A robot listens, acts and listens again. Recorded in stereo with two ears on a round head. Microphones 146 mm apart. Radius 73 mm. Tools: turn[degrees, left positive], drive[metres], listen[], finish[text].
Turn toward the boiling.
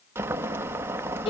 Action: turn[-30]
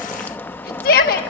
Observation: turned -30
Thought: So it is at 10° left.
Action: turn[10]
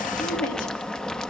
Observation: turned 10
Action: finish[Facing the boiling.]